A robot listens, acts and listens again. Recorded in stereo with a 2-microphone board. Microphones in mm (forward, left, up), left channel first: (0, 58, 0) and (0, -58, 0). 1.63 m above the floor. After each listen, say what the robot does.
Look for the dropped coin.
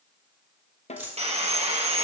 Turn 30° right.
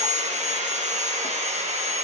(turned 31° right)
Keep listening.
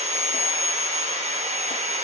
I heard a dropped coin, but can't make it out now. It was about 15° left or 135° right.